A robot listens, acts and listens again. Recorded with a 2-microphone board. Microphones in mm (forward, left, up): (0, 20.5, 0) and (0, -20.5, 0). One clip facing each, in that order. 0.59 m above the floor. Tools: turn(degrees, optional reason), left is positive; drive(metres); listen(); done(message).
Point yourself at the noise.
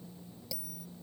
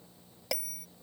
turn(degrees=-60, reason="The bell: about 60° right or 120° right.")
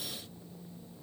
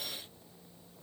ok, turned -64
listen()
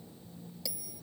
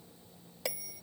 turn(degrees=-55, reason="So it is at 55° right.")
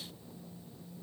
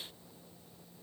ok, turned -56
listen()
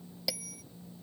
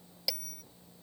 done("Facing the bell.")